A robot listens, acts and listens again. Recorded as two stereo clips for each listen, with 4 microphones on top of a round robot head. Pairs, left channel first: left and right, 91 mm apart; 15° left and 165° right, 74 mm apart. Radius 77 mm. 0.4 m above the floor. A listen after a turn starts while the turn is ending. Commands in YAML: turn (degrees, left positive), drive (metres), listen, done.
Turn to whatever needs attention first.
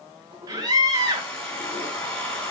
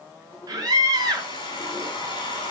turn: -135
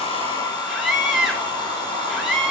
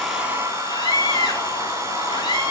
done: "Facing the scream."